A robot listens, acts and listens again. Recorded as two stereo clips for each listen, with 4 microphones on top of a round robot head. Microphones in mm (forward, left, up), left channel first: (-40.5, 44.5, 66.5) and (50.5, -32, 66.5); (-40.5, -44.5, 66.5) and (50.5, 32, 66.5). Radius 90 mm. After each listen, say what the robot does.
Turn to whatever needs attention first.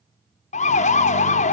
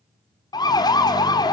Turn 160° left.
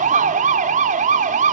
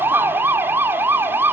Turn 35° right.
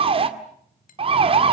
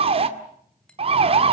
Found it: a siren, straight ahead.